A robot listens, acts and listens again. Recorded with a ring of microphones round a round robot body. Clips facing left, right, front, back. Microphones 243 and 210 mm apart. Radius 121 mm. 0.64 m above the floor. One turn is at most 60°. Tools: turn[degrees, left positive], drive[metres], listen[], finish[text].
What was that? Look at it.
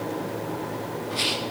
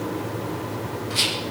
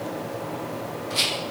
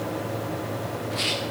Thought: The rattle: 40° right.
Action: turn[-40]
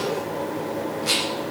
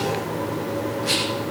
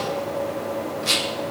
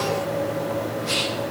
Thought: The rattle is now 10° left.
Action: turn[10]
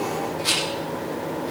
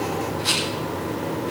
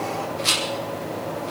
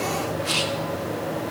Action: finish[Facing the rattle.]